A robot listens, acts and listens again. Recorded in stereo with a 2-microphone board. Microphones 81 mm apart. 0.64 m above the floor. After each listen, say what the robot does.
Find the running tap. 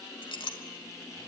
Keep listening.
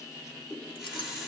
Turn 30° right.
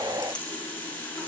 Turn 20° left.
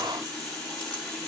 Found it: a running tap, straight ahead, over 4 m away.